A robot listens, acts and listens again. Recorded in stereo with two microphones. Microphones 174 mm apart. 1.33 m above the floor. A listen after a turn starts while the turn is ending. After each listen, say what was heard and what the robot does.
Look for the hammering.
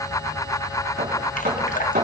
The hammering: about 65° right or 115° right. Turn 65° right.
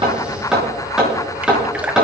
Facing the hammering.